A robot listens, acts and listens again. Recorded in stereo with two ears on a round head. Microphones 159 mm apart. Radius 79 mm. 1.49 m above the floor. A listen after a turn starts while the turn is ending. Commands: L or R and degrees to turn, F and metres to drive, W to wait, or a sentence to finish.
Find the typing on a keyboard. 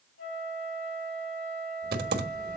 R60
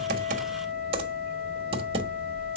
R40
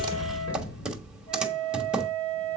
Found it: typing on a keyboard, straight ahead.